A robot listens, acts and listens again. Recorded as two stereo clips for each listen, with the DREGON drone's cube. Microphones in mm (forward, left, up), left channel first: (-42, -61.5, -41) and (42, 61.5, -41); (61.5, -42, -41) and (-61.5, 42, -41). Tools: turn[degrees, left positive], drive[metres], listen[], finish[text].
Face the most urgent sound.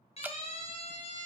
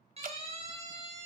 Thought: The siren: 170° right.
Action: turn[-170]
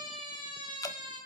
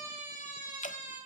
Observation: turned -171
Action: finish[Facing the siren.]